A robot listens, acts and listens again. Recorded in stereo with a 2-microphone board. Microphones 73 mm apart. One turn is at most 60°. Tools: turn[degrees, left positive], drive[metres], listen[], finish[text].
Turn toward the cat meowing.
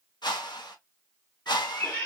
Thought: The cat meowing: about 20° left or 160° left.
Action: turn[20]
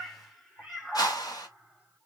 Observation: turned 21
Action: finish[Found it: a cat meowing, straight ahead.]